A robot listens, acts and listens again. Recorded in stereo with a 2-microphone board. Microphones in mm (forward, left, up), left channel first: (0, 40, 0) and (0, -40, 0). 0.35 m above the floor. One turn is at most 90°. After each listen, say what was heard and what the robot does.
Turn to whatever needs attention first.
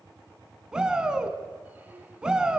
Turn 30° right.
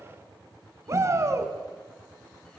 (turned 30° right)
So it is at 140° right. Turn 90° right.
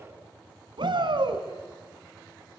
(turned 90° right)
The shout is now 85° right. Turn 85° right.
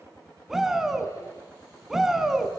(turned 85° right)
Facing the shout.